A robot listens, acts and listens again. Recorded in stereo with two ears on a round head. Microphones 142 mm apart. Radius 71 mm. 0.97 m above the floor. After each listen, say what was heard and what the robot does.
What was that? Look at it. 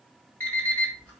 Turn 30° left.
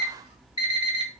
So it is at 140° left. Turn 140° left.
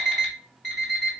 Found it: an alarm clock, straight ahead, 2 to 4 m away.